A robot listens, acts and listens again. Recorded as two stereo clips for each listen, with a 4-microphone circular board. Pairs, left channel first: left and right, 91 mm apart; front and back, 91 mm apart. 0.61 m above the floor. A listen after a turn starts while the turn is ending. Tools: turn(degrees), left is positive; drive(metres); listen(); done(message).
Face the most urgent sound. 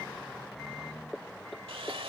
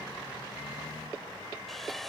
listen()
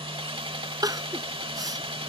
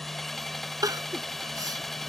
turn(degrees=-135)
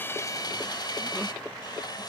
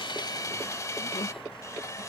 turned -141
turn(degrees=10)
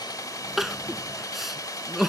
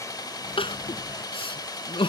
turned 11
done("Facing the crying.")